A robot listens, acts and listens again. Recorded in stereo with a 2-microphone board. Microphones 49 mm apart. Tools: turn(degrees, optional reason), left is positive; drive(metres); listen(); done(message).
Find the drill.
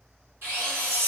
turn(degrees=-60, reason="The drill: about 60° right or 120° right.")
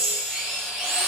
turn(degrees=-20, reason="So it is at 20° right.")
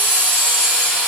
done("Found it: a drill, straight ahead.")